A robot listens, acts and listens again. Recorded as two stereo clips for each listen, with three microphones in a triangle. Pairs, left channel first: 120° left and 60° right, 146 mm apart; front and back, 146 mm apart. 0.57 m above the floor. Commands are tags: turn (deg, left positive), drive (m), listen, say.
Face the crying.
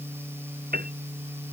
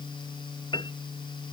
<listen/>
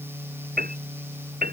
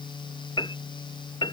<listen/>
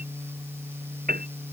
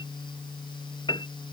<say>I can't make out crying, only a piano.</say>